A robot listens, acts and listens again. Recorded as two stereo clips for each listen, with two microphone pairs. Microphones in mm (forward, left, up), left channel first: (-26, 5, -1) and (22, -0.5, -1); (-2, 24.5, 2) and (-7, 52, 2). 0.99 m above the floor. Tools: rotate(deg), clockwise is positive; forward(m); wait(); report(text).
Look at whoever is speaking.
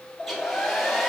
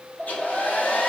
wait()
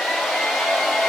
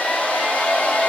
wait()
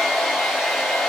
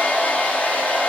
report("I can't make out anyone speaking, only a hair dryer.")